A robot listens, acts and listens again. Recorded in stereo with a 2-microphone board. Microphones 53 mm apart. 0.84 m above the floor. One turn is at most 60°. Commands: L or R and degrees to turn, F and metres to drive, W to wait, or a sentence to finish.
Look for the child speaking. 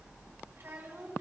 R45
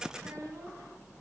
W
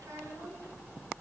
W
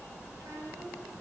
I heard a child speaking, but can't make it out now. It was about straight ahead or 90° right.